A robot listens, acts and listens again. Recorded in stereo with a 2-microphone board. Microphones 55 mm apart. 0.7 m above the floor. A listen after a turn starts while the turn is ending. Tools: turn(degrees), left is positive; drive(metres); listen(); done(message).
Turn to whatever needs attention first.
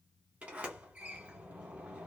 listen()
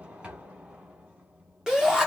turn(degrees=-30)
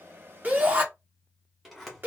turn(degrees=-140)
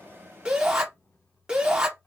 turn(degrees=-15)
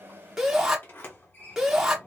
done("Facing the shout, under 1 m away.")